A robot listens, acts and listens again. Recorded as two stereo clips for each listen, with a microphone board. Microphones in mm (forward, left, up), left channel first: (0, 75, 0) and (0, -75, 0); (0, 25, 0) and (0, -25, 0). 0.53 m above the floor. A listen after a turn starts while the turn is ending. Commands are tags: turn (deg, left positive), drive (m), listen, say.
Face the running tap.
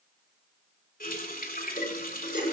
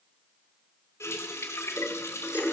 <turn deg="70"/>
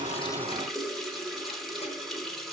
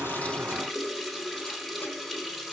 <say>Facing the running tap.</say>